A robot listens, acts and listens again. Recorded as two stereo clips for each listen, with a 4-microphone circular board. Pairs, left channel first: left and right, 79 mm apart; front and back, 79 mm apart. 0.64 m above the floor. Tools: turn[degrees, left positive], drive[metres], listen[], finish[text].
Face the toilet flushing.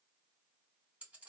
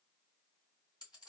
Action: listen[]
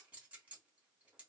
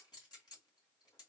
Action: listen[]
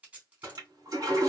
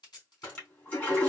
Thought: The toilet flushing: 55° right.
Action: turn[-55]
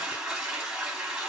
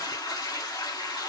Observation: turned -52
Action: finish[Found it: a toilet flushing, straight ahead.]